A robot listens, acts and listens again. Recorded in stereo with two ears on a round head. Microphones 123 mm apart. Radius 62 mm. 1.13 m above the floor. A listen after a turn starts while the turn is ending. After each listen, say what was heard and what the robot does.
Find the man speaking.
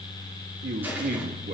The man speaking: about 70° right or 110° right. Turn 70° right.
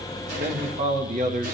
So it is at 60° right. Turn 60° right.
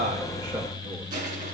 Keep listening.
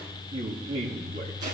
The man speaking is now 40° right. Turn 40° right.
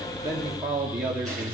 The man speaking is now 15° right. Turn 15° right.
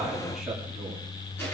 Found it: a man speaking, straight ahead, 2 to 4 m away.